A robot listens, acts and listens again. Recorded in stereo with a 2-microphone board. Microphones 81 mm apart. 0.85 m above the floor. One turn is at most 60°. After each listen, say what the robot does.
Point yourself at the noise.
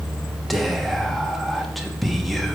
Turn 30° left.
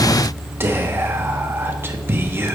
Turn 30° right.
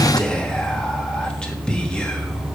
Turn 10° left.
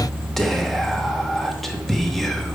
Facing the whispering.